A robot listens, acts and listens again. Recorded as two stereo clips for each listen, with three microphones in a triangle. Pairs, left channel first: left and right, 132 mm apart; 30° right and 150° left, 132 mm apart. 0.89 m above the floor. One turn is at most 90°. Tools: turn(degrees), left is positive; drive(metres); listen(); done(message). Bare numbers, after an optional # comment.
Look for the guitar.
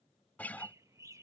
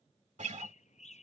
# The guitar: 165° left.
turn(90)
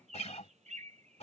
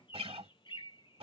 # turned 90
# The guitar is now 115° left.
turn(90)
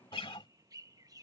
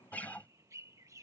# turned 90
# The guitar is now 45° left.
turn(45)
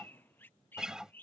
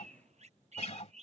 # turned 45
done("Found it: a guitar, straight ahead.")